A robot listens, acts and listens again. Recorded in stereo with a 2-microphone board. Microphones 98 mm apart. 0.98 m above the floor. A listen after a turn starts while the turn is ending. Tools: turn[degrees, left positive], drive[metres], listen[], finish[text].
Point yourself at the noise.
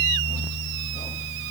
Action: listen[]
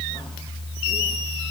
Action: listen[]
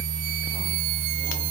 Action: finish[I can't make out anything to turn to.]